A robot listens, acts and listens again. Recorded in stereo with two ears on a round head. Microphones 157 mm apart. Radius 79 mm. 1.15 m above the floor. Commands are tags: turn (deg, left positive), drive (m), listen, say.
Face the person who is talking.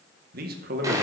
<turn deg="-50"/>
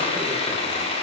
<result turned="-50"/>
<listen/>
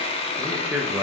<turn deg="-10"/>
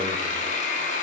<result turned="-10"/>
<listen/>
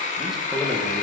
<say>Found it: a man speaking, straight ahead, 1 to 2 m away.</say>